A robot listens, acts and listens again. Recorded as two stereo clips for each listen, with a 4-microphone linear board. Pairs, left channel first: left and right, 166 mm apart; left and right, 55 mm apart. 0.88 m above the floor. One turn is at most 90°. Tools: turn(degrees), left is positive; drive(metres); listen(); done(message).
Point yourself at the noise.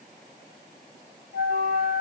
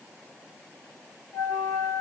turn(degrees=90)
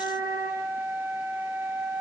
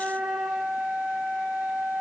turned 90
turn(degrees=-15)
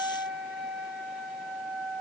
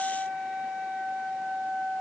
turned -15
done("Found it: a flute, straight ahead.")